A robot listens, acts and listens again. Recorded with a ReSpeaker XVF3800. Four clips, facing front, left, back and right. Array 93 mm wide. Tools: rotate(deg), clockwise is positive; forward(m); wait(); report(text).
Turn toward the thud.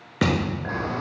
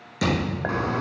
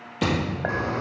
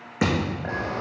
rotate(30)
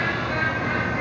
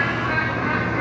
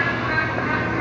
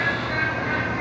report("Facing where the thud came from. I can't hear it now.")